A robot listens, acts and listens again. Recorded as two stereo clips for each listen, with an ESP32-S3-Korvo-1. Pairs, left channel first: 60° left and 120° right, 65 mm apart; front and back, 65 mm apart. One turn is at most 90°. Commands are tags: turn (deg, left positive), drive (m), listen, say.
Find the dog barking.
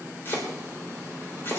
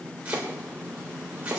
<listen/>
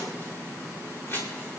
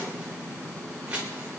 <listen/>
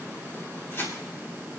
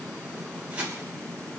<say>I can't make out a dog barking, only chopping.</say>